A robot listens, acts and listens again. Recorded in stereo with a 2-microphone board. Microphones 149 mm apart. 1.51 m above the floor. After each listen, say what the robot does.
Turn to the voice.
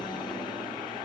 Keep listening.
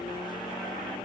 Keep listening.
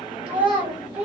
Turn 30° right.
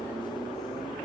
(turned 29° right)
Keep listening.
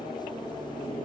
Keep listening.
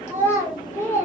Turn 20° left.
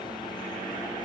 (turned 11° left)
Turn 10° left.
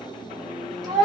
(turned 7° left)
Facing the child speaking, 1 to 2 m away.